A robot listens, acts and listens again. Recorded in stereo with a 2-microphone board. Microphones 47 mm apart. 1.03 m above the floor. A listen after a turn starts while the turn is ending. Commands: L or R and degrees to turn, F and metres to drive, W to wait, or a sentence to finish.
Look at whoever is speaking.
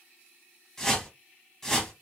W
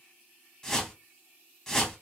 W
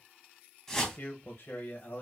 L50
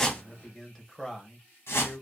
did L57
Facing the man speaking, under 1 m away.